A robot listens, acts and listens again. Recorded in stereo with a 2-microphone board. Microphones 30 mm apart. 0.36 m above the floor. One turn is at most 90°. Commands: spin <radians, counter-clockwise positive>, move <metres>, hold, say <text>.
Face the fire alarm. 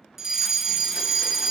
spin -0.52
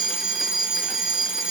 spin -1.57
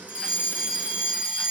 spin -0.87
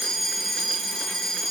say Found it: a fire alarm, straight ahead, 2 to 4 m away.